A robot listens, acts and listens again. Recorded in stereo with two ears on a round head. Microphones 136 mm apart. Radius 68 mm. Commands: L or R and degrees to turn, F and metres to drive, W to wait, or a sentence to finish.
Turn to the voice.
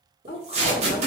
L70
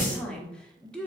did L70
Facing the woman speaking, under 1 m away.